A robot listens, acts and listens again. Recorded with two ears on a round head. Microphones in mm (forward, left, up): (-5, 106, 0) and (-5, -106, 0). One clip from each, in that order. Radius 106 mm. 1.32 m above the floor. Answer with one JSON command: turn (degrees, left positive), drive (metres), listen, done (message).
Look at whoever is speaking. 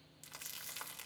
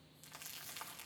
{"listen": true}
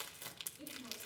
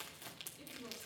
{"turn": -90}
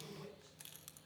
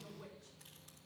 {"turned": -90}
{"done": "Facing the woman speaking."}